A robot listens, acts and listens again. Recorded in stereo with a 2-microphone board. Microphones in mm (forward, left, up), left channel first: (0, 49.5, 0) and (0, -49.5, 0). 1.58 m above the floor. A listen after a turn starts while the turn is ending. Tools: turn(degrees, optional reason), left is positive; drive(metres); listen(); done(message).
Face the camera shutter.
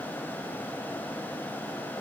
listen()
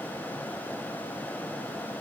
listen()
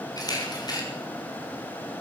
turn(degrees=40, reason="The camera shutter: about 40° left or 140° left.")
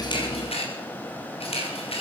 turn(degrees=100, reason="So it is at 100° left.")
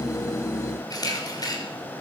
turn(degrees=40, reason="The camera shutter is now 40° left.")
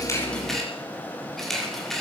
done("Found it: a camera shutter, straight ahead.")